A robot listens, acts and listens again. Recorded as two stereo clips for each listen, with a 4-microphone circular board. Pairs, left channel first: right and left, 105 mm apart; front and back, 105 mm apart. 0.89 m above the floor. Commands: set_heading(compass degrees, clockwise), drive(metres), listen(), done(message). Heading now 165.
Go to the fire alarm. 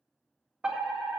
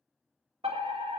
set_heading(0)
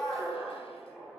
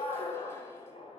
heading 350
set_heading(0)
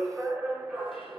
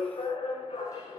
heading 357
drive(1.0)
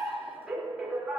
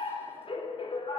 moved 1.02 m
drive(1.0)
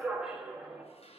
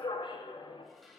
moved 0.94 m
drive(1.0)
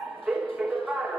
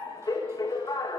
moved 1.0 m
drive(1.0)
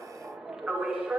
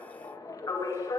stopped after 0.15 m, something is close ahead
set_heading(347)
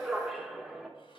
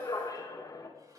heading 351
done("Arrived at the fire alarm, straight ahead.")